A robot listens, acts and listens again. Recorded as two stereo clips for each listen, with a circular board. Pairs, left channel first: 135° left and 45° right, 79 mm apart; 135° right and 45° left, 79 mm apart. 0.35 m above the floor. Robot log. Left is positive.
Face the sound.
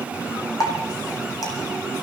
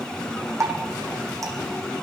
note: The dripping: 95° left.
cmd yaw +95
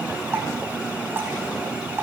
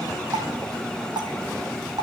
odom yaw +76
note: The dripping is now 15° left.
cmd yaw +15
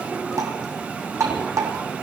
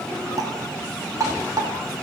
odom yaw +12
end: Found it: dripping, straight ahead, 2 to 4 m away.